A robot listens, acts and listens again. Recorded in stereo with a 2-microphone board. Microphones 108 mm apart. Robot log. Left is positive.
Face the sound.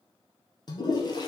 note: The toilet flushing: about 40° left or 140° left.
cmd yaw +40
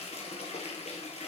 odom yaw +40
note: So it is at 100° left.
cmd yaw +100
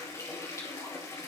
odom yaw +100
note: The toilet flushing is now 25° left.
cmd yaw +25
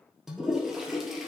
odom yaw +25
end: Found it: a toilet flushing, straight ahead, 2 to 4 m away.